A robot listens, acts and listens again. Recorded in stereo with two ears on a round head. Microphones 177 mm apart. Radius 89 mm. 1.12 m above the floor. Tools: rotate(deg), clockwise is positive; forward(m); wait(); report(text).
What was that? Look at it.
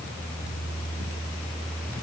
wait()
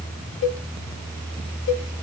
rotate(-70)
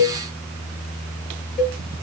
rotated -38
rotate(-35)
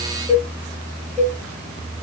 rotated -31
report("Found it: a cowbell, straight ahead, 1 to 2 m away.")